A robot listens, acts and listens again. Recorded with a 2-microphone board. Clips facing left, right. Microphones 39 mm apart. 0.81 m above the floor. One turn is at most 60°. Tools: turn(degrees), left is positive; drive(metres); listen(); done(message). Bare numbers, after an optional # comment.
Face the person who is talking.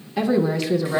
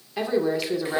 turn(-30)
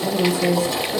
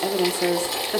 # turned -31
# So it is at 120° right.
turn(-60)
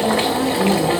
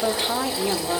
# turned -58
# The woman speaking is now 15° right.
turn(-15)
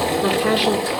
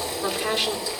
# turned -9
# The woman speaking is now 10° left.
turn(10)
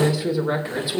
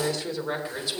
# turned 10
# The woman speaking is now 15° left.
turn(15)
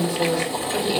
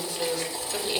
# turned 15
done("Found it: a woman speaking, straight ahead, 2 to 4 m away.")